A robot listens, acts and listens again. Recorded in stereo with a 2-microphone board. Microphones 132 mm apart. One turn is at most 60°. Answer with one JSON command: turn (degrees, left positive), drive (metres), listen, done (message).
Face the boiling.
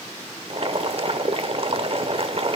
{"turn": -50}
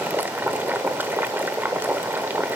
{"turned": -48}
{"turn": -20}
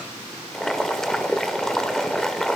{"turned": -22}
{"done": "Facing the boiling."}